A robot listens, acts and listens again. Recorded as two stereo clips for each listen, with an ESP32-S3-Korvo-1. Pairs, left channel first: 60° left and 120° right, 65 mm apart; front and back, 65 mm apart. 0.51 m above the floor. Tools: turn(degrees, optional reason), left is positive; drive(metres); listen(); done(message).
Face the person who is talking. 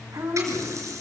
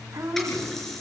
turn(degrees=-140, reason="The woman speaking: 140° right.")
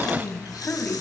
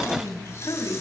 done("Found it: a woman speaking, straight ahead, over 4 m away.")